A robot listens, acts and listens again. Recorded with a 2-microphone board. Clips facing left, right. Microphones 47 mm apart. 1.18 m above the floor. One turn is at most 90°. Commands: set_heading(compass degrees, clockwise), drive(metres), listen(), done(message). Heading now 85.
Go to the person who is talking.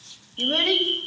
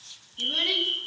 set_heading(25)
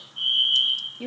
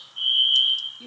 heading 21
set_heading(326)
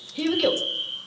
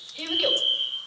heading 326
drive(1.0)
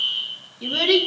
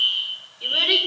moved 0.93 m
set_heading(336)
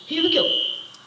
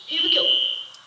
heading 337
drive(1.0)
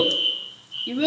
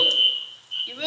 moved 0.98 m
drive(1.0)
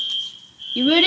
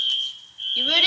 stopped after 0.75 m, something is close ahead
set_heading(322)
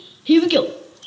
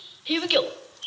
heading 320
done("I am next to the child speaking.")